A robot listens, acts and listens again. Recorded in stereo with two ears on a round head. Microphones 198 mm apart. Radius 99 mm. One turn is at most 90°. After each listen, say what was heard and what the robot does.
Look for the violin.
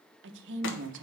Keep listening.
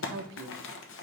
Keep listening.
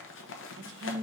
I can't make out a violin, only a woman speaking and crumpling.